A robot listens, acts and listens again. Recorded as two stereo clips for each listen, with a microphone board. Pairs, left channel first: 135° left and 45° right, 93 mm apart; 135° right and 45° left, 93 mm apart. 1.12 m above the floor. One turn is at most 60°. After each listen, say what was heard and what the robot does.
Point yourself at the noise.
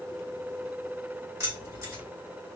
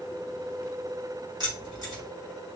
The keys jangling: 10° left. Turn 10° left.
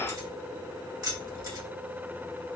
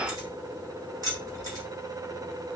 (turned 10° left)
Found it: keys jangling, straight ahead.